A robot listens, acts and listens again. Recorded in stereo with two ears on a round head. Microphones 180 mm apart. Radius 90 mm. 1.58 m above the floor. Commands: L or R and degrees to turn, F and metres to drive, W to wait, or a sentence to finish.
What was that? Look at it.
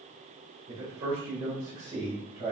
R20
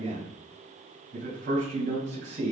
R135
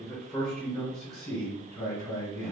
Facing the man speaking.